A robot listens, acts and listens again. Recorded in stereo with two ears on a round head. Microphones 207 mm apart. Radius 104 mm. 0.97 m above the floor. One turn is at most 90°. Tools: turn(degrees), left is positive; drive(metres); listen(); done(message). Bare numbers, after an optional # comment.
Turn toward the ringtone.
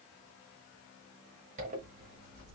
listen()
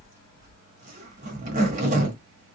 listen()
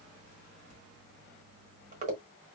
done("I can't make out a ringtone, only a zipper.")